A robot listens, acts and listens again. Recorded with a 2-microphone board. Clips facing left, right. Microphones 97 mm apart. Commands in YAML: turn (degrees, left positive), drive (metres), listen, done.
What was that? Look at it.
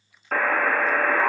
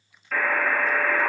turn: 50
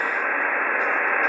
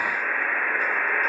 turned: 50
turn: 75
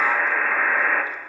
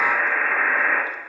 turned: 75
done: "Facing the buzzer, 1 to 2 m away."